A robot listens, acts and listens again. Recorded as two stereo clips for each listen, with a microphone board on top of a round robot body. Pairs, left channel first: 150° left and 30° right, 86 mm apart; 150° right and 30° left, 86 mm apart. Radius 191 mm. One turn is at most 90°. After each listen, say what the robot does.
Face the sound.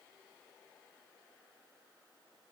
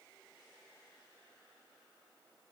Keep listening.
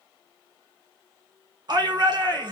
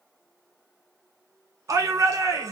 Turn 10° right.
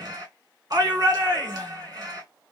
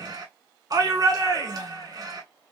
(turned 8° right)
Facing the shout.